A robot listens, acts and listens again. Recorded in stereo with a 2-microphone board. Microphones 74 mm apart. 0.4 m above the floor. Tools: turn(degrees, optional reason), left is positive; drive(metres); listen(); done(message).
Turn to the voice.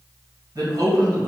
turn(degrees=-65, reason="The man speaking: about 65° right or 115° right.")
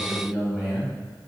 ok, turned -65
turn(degrees=-10, reason="So it is at 10° right.")
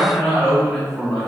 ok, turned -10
done("Found it: a man speaking, straight ahead.")